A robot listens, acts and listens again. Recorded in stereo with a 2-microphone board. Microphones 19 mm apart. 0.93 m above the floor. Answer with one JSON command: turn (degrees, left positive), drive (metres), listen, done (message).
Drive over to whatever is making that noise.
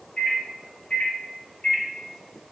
{"turn": 70}
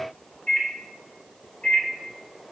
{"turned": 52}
{"turn": 50}
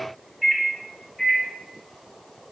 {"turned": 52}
{"drive": 1.0}
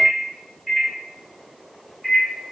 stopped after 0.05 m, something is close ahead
{"done": "Something is in my way. I am facing the microwave but have not reached it."}